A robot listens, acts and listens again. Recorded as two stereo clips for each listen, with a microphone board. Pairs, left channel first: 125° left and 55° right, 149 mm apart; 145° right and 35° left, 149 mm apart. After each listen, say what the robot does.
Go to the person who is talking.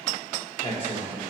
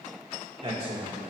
Turn 80° left.
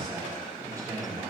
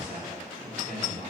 Turn 10° left.
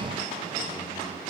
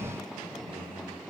Keep listening.
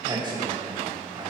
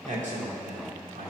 Drive 1.0 m forward.
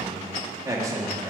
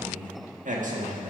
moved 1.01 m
Turn 10° left.
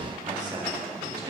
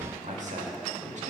Drive 1.0 m forward.
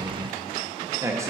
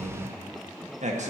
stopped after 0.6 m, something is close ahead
Turn 10° left.
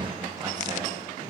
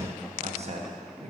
Arrived at the man speaking, straight ahead.